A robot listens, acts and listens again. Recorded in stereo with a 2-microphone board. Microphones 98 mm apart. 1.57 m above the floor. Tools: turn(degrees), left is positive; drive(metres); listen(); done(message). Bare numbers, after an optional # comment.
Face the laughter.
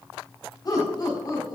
# The laughter: about 45° left or 135° left.
turn(45)
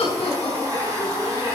# So it is at 95° left.
turn(95)
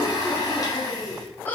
# The laughter is now 20° left.
turn(20)
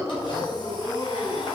done("Found it: laughter, straight ahead.")